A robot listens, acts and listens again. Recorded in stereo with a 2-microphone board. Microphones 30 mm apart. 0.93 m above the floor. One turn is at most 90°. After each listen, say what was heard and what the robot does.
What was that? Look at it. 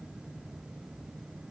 Keep listening.
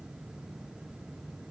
Keep listening.
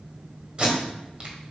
The tape being pulled: about 35° right or 145° right. Turn 35° right.
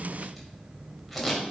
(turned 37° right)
Found it: tape being pulled, straight ahead.